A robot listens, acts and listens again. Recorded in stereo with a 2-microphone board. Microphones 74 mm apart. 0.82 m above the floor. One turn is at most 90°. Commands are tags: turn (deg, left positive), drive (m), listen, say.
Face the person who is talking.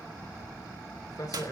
<turn deg="55"/>
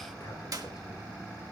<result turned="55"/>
<listen/>
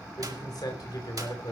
<turn deg="65"/>
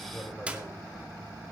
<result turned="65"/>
<listen/>
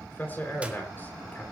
<turn deg="25"/>
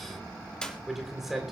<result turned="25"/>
<say>Found it: a man speaking, straight ahead.</say>